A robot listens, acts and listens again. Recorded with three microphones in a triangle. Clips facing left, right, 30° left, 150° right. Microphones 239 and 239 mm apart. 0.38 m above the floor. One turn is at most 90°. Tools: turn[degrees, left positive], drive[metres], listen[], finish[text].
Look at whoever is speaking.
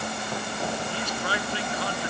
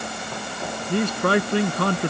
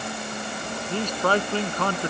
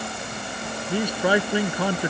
Thought: The man speaking: 70° right.
Action: turn[-70]
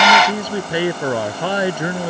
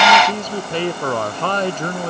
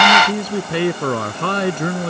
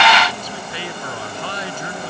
Thought: The man speaking is now 10° left.
Action: turn[10]
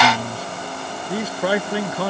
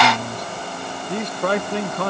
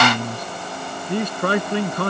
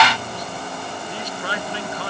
Action: finish[Facing the man speaking.]